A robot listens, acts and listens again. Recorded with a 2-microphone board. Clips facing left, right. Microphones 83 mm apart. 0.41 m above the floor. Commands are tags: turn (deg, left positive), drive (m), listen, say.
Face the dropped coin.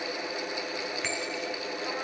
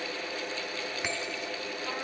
<listen/>
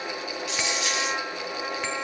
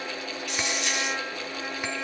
<turn deg="90"/>
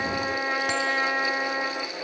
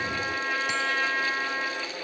<say>I heard a dropped coin from this way, but can't make it out now.</say>